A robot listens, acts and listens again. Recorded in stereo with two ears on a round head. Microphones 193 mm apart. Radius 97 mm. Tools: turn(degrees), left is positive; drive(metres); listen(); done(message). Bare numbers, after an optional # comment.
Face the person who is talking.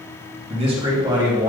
turn(-30)
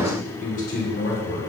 # So it is at 50° left.
turn(50)
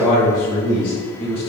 # The man speaking is now 25° left.
turn(25)
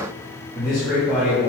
done("Found it: a man speaking, straight ahead.")